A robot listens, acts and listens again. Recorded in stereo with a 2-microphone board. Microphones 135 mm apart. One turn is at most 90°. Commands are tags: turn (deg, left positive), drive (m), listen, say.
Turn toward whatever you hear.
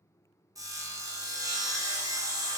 <turn deg="-25"/>
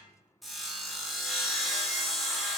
<say>Facing the sawing, under 1 m away.</say>